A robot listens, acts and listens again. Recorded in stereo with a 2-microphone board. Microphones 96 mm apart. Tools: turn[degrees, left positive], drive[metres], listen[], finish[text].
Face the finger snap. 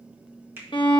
Thought: The finger snap: about 20° right or 160° right.
Action: turn[-20]
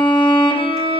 Action: listen[]
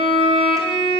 Action: listen[]
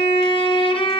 Action: finish[I heard a finger snap, but can't make it out now. It was about straight ahead or 140° right.]